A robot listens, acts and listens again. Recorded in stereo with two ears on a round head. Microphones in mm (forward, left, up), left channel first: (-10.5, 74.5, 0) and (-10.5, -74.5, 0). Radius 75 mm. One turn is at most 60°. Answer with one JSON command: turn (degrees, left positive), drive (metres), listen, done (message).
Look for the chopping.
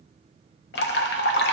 {"listen": true}
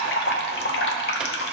{"listen": true}
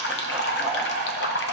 {"done": "I can't make out chopping to turn to."}